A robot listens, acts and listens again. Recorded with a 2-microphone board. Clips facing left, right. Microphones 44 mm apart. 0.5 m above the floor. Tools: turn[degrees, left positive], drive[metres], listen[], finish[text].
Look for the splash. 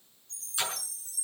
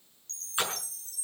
Thought: The splash: about 30° right or 150° right.
Action: turn[-30]
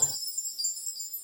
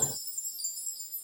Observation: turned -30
Action: listen[]
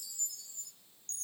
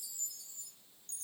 Action: finish[I heard a splash, but can't make it out now. It was about straight ahead or 120° right.]